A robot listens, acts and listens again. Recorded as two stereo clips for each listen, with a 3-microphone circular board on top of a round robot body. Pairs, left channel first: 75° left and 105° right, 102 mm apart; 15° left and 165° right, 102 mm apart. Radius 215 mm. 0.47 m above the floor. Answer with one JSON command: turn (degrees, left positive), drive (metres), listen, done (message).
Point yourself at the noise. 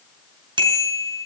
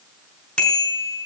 {"turn": -65}
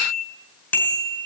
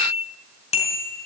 {"done": "Facing the bicycle bell."}